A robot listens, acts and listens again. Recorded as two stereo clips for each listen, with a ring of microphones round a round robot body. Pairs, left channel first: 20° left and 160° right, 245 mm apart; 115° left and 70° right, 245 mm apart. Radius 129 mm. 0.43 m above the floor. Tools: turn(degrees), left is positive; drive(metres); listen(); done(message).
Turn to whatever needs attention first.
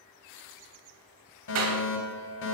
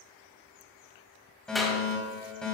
turn(degrees=25)
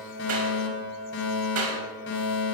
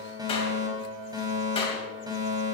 done("Found it: a fire alarm, straight ahead, 2 to 4 m away.")